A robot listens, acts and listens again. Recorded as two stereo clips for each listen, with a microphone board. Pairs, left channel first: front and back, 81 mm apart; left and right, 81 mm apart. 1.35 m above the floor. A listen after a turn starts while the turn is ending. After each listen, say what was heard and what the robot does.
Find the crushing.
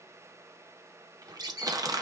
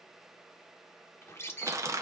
The crushing: 140° right. Turn 140° right.
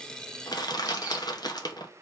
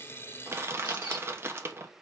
The crushing is now 30° right. Turn 30° right.
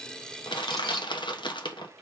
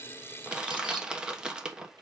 The crushing is now 10° right. Turn 10° right.
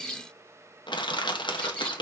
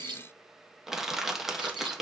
Found it: crushing, straight ahead.